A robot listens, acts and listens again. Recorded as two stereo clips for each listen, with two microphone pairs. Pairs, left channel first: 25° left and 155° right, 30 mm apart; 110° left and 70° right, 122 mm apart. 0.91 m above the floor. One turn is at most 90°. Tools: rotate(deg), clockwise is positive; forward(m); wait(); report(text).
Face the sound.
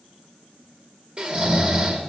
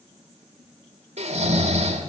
rotate(90)
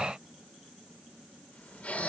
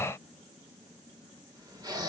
rotate(15)
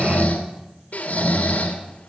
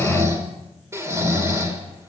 report("Found it: snoring, straight ahead, 1 to 2 m away.")